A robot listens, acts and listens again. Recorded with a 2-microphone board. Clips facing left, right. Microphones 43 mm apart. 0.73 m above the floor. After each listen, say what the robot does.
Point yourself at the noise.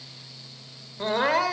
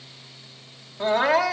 Turn 30° right.
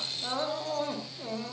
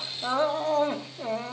Turn 150° right.
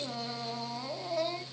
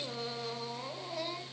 Found it: crying, straight ahead, 2 to 4 m away.